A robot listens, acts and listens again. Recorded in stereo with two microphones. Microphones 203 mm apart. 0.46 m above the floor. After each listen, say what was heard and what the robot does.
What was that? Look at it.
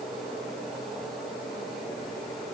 Keep listening.
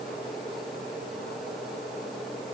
Keep listening.
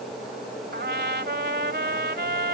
The trumpet: about 60° right or 120° right. Turn 60° right.
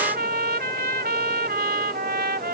So it is at 55° right. Turn 55° right.
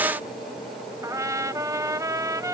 The trumpet is now 15° right. Turn 15° right.
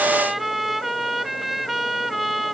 Facing the trumpet.